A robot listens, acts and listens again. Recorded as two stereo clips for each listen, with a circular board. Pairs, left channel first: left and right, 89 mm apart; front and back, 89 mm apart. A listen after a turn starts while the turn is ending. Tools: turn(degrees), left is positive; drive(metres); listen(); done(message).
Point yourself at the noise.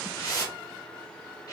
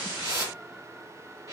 turn(degrees=130)
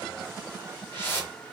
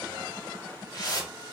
turn(degrees=30)
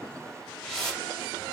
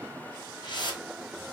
done("Facing the whoosh, under 1 m away.")